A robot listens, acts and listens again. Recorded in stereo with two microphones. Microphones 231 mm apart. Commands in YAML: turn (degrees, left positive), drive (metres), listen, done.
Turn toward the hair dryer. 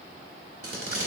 listen: true
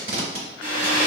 turn: 90
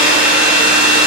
done: "Facing the hair dryer, 1 to 2 m away."